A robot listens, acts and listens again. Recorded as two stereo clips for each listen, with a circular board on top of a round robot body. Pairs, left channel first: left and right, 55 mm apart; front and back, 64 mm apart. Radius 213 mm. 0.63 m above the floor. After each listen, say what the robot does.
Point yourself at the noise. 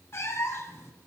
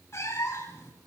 Turn 50° left.
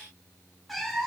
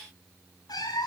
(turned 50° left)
Facing the cat meowing.